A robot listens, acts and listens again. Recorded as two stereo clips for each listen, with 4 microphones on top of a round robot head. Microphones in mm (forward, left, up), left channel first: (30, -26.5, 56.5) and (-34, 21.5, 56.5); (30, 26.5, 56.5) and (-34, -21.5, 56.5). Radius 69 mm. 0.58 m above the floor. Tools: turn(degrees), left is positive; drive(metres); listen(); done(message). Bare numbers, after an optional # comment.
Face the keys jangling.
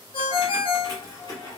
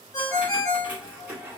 # The keys jangling: 75° right.
turn(-75)
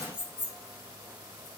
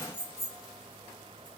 # The keys jangling is now 20° right.
turn(-20)
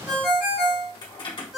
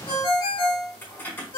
# The keys jangling is now 30° right.
turn(-30)
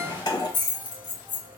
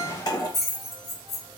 # The keys jangling is now 10° right.
turn(-10)
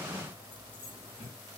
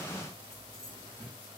done("Facing the keys jangling.")